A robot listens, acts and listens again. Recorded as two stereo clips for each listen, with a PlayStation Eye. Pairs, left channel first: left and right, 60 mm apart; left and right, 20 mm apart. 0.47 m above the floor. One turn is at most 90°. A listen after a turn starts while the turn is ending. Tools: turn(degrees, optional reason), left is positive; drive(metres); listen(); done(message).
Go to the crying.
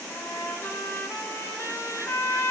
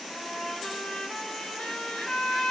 listen()
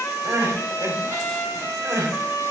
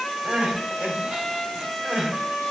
turn(degrees=-65, reason="The crying: about 65° right or 115° right.")
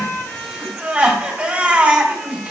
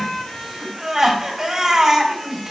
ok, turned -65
turn(degrees=-25, reason="So it is at 25° right.")
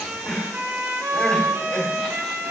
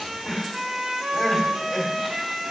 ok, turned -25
turn(degrees=20, reason="The crying is now 20° left.")
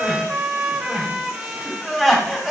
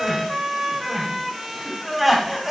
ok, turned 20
drive(metres=1.0)
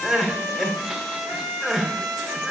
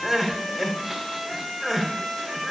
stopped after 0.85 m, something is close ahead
done("Arrived at the crying, straight ahead.")